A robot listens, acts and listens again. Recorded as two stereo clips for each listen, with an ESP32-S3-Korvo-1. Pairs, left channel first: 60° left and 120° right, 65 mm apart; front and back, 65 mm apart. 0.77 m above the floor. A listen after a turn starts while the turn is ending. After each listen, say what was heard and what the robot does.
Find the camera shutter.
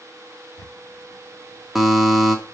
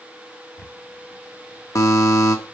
The camera shutter: 60° left. Turn 60° left.
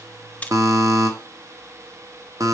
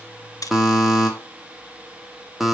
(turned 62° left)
Facing the camera shutter.